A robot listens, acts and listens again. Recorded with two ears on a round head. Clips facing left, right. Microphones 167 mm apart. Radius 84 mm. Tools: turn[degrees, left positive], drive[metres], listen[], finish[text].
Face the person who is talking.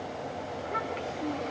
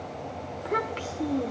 Thought: The child speaking: about 65° right or 115° right.
Action: turn[-65]
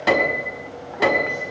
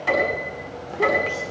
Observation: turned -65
Action: listen[]
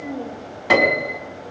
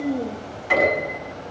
Thought: So it is at 45° right.
Action: turn[-45]
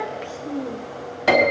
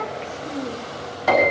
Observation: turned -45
Action: finish[Found it: a child speaking, straight ahead.]